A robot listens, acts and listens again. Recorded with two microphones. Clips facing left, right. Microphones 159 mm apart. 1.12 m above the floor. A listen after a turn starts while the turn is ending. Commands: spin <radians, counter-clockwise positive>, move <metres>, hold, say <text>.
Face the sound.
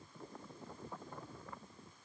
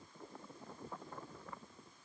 hold
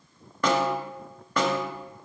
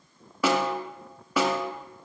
spin -0.52
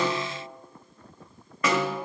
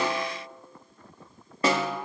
spin -2.44
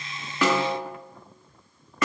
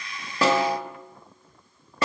spin -0.61
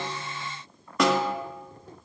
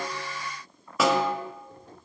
say Facing the snare drum, 1 to 2 m away.